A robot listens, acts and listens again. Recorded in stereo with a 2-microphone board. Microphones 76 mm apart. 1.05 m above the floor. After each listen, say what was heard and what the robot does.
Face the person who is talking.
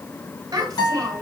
The child speaking: about 50° right or 130° right. Turn 50° right.
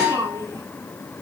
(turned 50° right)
So it is at 80° right. Turn 80° right.
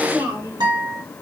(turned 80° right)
The child speaking is now 45° right. Turn 45° right.
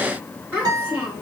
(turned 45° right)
The child speaking is now 15° right. Turn 15° right.
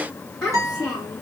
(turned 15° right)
Facing the child speaking, 2 to 4 m away.